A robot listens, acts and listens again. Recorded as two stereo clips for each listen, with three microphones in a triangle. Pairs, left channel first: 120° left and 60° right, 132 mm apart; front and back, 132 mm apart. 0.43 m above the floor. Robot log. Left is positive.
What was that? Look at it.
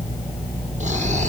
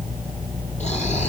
note: The snoring: 30° right.
cmd yaw -30
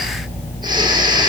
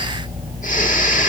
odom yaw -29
end: Facing the snoring.